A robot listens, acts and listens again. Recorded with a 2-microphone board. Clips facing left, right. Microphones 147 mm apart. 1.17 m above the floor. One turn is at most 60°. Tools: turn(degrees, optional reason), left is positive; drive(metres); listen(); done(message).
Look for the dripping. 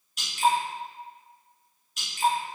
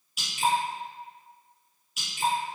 turn(degrees=-30)
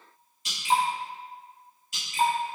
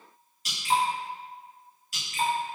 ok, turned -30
turn(degrees=20, reason="So it is at 20° left.")
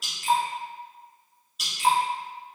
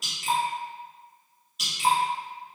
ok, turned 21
done("Found it: dripping, straight ahead.")